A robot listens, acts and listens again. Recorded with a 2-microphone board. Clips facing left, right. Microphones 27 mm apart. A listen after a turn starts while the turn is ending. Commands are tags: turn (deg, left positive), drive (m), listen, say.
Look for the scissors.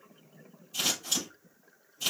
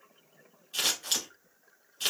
<turn deg="-60"/>
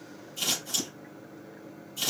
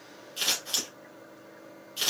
<turn deg="-55"/>
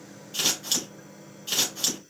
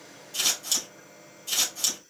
<turn deg="20"/>
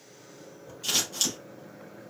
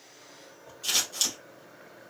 <say>Found it: scissors, straight ahead, 2 to 4 m away.</say>